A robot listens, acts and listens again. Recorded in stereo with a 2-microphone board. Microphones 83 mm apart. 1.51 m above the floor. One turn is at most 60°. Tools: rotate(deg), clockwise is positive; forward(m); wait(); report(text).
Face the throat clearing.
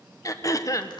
rotate(-40)
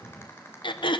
rotate(-60)
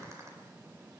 rotate(-45)
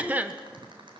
rotate(20)
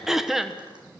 report("Facing the throat clearing, 1 to 2 m away.")